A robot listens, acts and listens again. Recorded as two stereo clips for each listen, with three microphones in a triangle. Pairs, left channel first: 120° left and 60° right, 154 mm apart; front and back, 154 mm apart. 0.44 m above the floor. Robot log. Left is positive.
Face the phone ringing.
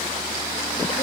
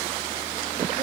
cmd idle
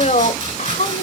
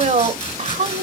cmd idle
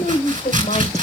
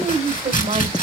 end: I can't make out a phone ringing to turn to.